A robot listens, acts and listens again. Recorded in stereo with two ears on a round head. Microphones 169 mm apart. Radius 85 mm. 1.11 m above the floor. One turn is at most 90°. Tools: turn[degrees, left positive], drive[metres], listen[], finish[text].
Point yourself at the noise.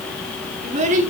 Thought: The child speaking: about 45° right or 135° right.
Action: turn[-45]
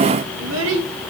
Thought: So it is at 100° right.
Action: turn[-90]
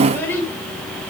Thought: The child speaking is now 10° left.
Action: turn[10]
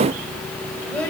Thought: The child speaking is now 10° left.
Action: turn[10]
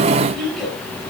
Action: finish[Found it: a child speaking, straight ahead.]